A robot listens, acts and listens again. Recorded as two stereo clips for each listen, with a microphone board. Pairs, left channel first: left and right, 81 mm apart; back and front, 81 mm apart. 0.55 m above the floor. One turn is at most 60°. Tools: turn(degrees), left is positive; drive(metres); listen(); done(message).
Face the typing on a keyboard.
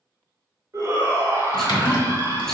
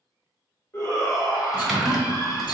turn(degrees=60)
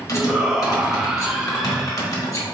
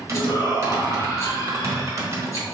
turn(degrees=50)
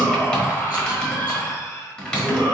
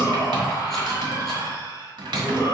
turn(degrees=10)
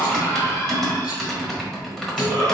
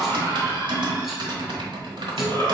done("Found it: typing on a keyboard, straight ahead.")